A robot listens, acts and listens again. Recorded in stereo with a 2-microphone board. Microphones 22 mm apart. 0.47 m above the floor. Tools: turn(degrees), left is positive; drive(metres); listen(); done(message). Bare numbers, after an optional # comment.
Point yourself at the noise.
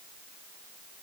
listen()
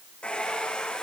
# The hair dryer: about 50° left or 130° left.
turn(50)
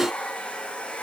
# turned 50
# So it is at 75° left.
turn(75)
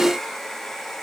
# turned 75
# The hair dryer is now 15° left.
turn(15)
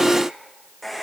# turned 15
done("Found it: a hair dryer, straight ahead.")